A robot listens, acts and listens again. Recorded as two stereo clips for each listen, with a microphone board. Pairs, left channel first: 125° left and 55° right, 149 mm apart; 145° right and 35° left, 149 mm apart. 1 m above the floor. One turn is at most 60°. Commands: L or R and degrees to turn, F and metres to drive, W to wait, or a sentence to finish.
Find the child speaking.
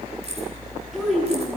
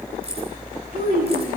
L30
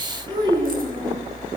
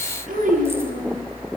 Found it: a child speaking, straight ahead, over 4 m away.